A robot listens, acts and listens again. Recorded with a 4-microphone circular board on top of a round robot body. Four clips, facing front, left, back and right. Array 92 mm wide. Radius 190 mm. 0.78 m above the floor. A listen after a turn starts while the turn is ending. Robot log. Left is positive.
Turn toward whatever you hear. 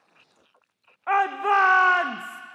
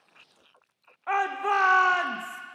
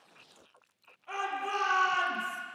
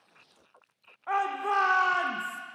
note: The shout: 10° left.
cmd yaw +10
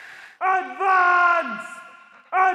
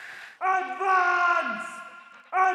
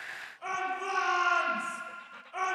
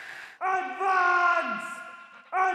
end: Facing the shout, under 1 m away.